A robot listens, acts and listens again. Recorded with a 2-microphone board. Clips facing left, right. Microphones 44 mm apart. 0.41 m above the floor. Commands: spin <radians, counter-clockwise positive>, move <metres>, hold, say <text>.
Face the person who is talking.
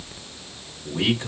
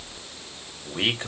spin -0.70
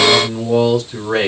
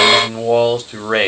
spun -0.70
spin -1.57
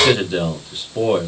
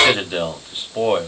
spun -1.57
spin -0.52
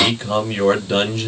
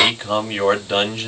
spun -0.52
spin -0.26
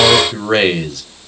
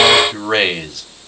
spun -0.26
say Facing the man speaking, 1 to 2 m away.